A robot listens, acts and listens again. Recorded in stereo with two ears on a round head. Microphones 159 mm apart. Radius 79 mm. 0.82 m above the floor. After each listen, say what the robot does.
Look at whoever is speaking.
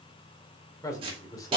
Turn 20° left.
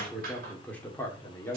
Turn 15° left.
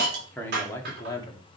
Turn 25° left.
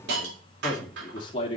Turn 35° left.
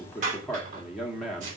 Facing the man speaking, 1 to 2 m away.